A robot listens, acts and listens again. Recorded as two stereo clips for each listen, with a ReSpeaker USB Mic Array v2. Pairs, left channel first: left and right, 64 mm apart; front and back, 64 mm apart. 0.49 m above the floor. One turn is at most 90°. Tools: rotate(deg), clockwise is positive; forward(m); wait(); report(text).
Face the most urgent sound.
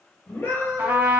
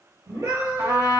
rotate(-90)
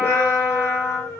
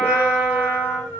rotate(-55)
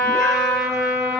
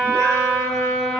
wait()
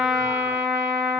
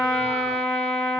wait()
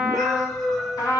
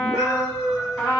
report("Found it: a scream, straight ahead, 1 to 2 m away.")